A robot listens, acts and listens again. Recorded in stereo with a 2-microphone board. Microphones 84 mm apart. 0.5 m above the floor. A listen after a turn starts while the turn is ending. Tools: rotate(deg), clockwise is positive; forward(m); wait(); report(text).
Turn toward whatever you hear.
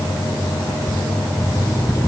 rotate(-35)
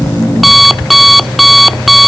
report("Found it: an alarm clock, straight ahead.")